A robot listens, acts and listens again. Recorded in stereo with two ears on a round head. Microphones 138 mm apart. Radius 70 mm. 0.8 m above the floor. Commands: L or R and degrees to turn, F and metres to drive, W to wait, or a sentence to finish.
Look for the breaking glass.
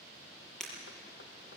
L30
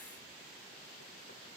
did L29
W
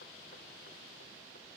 I heard breaking glass, but can't make it out now. It was about 25° right or 150° left.